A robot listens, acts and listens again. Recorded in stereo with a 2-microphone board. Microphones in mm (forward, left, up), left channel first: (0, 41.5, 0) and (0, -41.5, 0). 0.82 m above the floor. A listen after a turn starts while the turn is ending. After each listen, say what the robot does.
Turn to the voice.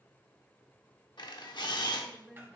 Turn 30° left.
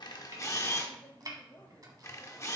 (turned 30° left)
Turn 150° left.
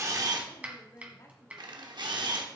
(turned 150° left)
Turn 45° left.
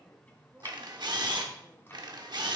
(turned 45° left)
Found it: a woman speaking, straight ahead, 1 to 2 m away.